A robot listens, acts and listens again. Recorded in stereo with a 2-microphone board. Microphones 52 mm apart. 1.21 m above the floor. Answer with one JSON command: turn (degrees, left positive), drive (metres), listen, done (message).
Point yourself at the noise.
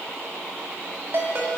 {"turn": -50}
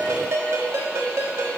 {"turn": -75}
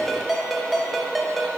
{"done": "Found it: a ringtone, straight ahead, 1 to 2 m away."}